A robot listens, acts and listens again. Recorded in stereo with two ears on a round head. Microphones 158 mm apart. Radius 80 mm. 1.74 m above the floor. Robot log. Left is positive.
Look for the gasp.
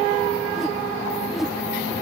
cmd idle
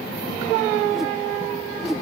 cmd idle
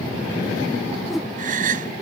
note: The gasp: about 50° right or 130° right.
cmd yaw -50
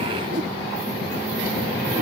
cmd idle
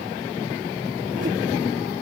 end: I heard a gasp, but can't make it out now. It was about straight ahead or 80° right.